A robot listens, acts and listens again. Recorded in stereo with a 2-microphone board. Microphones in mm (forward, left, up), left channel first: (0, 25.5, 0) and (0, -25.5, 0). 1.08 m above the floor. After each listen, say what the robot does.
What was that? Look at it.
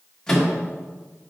Turn 30° left.
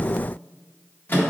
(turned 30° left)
Turn 140° left.
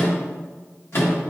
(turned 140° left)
Turn 60° left.
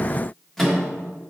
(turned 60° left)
Found it: a microwave, straight ahead.